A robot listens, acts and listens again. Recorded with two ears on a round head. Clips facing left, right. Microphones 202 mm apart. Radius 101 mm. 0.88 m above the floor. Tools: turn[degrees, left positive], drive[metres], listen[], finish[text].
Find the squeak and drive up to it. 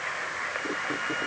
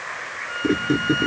Thought: The squeak: about 60° right or 120° right.
Action: turn[-60]
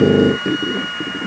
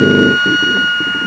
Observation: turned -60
Action: listen[]
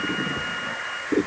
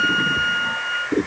Action: drive[1.0]
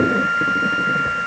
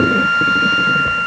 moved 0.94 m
Action: listen[]
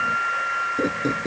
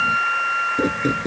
Thought: The squeak is now 15° right.
Action: turn[-15]
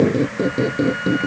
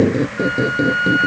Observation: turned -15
Action: drive[1.0]
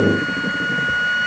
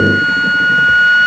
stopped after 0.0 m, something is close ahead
Action: listen[]
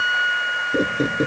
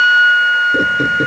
Action: listen[]
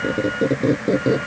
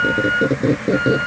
Action: finish[Arrived at the squeak, straight ahead.]